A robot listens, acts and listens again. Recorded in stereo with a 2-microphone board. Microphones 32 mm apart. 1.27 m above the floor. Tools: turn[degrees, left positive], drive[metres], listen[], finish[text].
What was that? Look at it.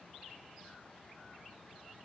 Action: listen[]
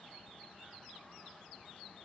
Action: listen[]
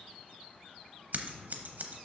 Thought: The scissors: about 60° right or 120° right.
Action: turn[-60]
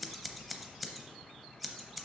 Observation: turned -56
Action: finish[Found it: scissors, straight ahead, under 1 m away.]